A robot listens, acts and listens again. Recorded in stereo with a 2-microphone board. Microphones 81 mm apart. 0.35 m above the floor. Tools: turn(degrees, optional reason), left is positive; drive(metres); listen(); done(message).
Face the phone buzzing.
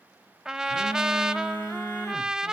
turn(degrees=30, reason="The phone buzzing: about 30° left or 150° left.")
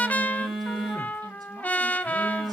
done("Facing the phone buzzing, over 4 m away.")